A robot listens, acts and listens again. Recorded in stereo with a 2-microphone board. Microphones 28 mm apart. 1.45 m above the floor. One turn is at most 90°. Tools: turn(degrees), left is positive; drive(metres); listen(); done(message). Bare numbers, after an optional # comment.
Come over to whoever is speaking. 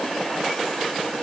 listen()
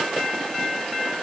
listen()
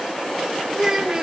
# The child speaking: about 20° right or 160° right.
turn(-20)
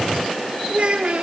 # So it is at 140° right.
turn(-90)
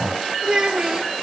# The child speaking is now 35° right.
turn(-35)
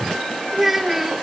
# The child speaking is now 15° right.
turn(-15)
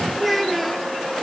drive(1.0)
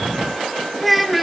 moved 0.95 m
drive(1.0)
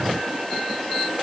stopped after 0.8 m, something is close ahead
listen()
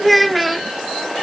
done("I am next to the child speaking.")